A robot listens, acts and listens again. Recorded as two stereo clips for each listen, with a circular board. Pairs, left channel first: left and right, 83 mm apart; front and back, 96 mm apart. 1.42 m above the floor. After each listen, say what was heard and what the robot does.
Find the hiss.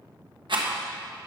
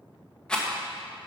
Keep listening.
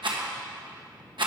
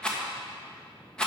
Keep listening.
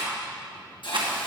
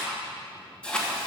The hiss: 75° left. Turn 75° left.
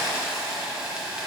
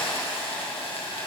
The hiss is now 10° right. Turn 10° right.
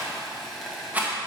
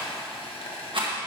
Found it: a hiss, straight ahead, 1 to 2 m away.